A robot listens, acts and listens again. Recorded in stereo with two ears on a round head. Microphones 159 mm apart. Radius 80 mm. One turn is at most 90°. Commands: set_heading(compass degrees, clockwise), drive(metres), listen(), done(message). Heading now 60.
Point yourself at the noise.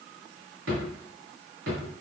set_heading(150)
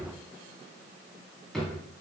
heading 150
done("Facing the drawer.")